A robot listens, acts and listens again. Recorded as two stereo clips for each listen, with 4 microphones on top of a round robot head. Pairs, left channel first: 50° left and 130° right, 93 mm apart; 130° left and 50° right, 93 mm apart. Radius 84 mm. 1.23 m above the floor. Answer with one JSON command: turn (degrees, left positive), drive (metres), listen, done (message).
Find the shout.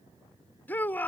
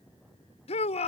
{"turn": 120}
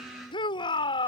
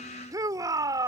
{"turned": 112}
{"turn": 10}
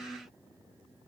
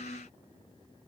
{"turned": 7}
{"listen": true}
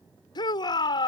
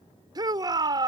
{"done": "Facing the shout."}